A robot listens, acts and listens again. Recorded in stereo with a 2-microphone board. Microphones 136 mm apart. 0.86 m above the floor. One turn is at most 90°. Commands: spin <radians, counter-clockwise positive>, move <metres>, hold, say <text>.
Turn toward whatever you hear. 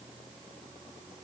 hold
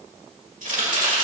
spin -1.31
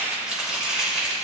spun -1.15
say Facing the chopping.